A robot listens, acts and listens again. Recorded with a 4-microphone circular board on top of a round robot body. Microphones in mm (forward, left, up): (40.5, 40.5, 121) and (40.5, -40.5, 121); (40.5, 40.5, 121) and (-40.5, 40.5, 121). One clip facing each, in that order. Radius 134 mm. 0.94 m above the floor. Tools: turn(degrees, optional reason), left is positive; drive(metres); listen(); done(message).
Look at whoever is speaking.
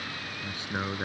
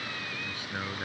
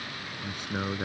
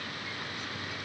turn(degrees=25, reason="The man speaking: 25° left.")
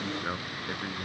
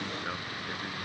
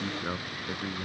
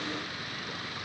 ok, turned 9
turn(degrees=20, reason="The man speaking is now 20° left.")
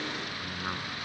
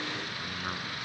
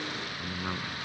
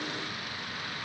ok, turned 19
done("Facing the man speaking.")